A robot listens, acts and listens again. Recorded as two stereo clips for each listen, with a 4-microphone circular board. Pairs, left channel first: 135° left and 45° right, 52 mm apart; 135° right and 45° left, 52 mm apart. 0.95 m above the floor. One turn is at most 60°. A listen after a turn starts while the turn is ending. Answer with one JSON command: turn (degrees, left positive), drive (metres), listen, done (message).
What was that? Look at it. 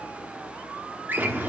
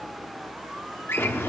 {"turn": -60}
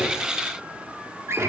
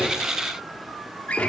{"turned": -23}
{"turn": -60}
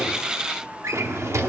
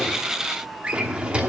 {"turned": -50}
{"turn": -20}
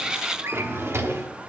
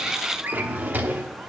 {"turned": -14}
{"done": "Facing the drawer."}